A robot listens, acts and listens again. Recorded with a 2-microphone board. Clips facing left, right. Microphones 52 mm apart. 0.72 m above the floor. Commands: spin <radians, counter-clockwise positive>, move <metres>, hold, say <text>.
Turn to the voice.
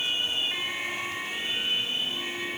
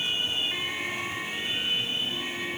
hold
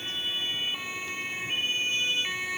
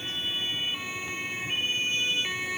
hold
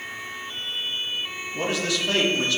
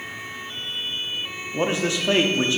spin -0.44
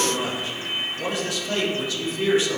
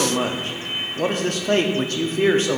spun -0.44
spin -2.18
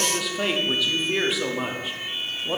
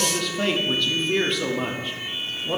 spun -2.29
say Found it: a man speaking, straight ahead.